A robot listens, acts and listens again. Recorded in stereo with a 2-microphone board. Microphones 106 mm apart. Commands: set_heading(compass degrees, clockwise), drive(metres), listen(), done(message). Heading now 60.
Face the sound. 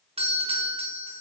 set_heading(130)
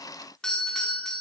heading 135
done("Found it: a doorbell, straight ahead, over 4 m away.")